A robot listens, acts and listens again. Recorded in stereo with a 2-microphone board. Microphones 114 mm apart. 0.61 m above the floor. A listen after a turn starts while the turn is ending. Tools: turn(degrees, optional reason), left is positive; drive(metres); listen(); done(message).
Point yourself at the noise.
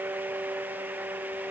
listen()
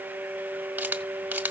turn(degrees=-30)
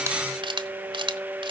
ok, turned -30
turn(degrees=-135, reason="So it is at 135° right.")
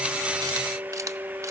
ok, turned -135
listen()
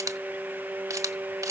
turn(degrees=-30, reason="The camera shutter is now 30° right.")
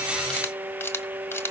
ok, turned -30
turn(degrees=20, reason="The camera shutter is now 20° left.")
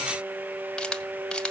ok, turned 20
done("Found it: a camera shutter, straight ahead, 1 to 2 m away.")